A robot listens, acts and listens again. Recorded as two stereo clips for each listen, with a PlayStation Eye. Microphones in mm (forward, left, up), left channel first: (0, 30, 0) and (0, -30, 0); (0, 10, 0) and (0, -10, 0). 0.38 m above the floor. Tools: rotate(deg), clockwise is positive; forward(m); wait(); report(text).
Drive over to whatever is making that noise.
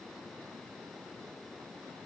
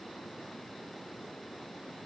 wait()
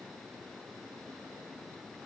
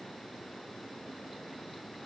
wait()
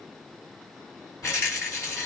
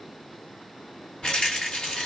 rotate(-60)
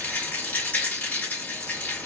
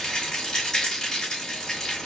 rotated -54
rotate(-35)
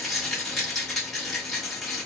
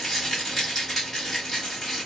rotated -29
forward(1.0)
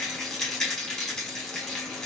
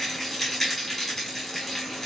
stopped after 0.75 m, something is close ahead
rotate(-10)
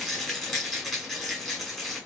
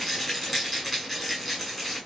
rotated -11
report("Arrived at the rattle, straight ahead.")